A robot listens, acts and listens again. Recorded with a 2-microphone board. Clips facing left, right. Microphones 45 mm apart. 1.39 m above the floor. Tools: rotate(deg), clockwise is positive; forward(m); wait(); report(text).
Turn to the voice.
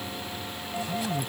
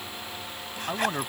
rotate(55)
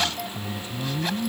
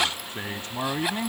rotate(70)
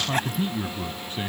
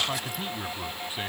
rotate(10)
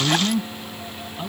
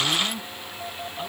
report("Found it: a man speaking, straight ahead.")